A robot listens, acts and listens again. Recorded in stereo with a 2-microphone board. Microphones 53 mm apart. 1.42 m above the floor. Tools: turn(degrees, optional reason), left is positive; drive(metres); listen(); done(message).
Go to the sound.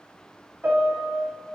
turn(degrees=-40, reason="The piano: about 40° right or 140° right.")
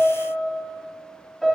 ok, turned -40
drive(metres=1.0)
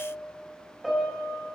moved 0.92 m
drive(metres=1.0)
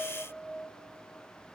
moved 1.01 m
listen()
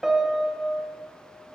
turn(degrees=-10, reason="The piano is now 10° right.")
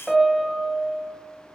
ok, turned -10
drive(metres=1.0)
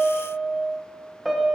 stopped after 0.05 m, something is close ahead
done("Arrived at the piano, straight ahead.")